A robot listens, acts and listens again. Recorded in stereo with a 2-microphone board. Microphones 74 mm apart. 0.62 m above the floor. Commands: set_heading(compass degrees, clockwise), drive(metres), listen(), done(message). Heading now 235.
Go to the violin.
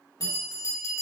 listen()
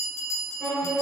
set_heading(205)
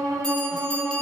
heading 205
set_heading(235)
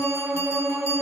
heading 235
drive(1.0)
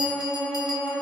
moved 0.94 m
drive(1.0)
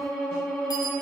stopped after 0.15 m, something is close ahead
done("Arrived at the violin, straight ahead.")